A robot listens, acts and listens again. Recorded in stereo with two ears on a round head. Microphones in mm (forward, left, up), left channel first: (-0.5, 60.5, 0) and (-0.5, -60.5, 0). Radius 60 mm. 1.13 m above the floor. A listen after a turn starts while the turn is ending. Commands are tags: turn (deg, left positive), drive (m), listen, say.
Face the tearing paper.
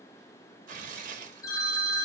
<turn deg="-60"/>
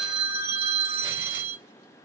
<listen/>
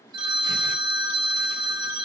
<listen/>
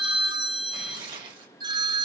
<turn deg="-40"/>
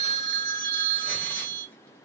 <listen/>
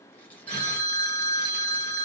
<listen/>
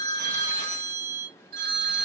<say>Facing where the tearing paper came from. I can't hear it now.</say>